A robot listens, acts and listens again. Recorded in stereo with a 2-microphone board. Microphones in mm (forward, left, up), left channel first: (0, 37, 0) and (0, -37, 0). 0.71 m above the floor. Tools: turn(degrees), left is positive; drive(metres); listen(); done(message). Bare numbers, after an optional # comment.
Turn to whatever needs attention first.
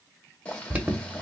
# The alarm: about 15° right or 165° right.
turn(-15)
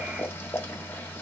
listen()
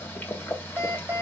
# So it is at 150° right.
turn(-150)
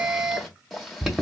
# The alarm is now 10° right.
turn(-10)
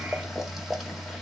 done("Facing the alarm, under 1 m away.")